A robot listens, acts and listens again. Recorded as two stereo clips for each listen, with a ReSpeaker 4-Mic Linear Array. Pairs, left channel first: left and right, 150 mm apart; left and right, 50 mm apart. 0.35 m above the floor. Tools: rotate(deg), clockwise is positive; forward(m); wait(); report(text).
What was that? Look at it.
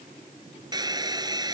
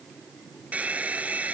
rotate(30)
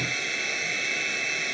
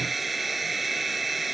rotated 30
report("Found it: a hair dryer, straight ahead.")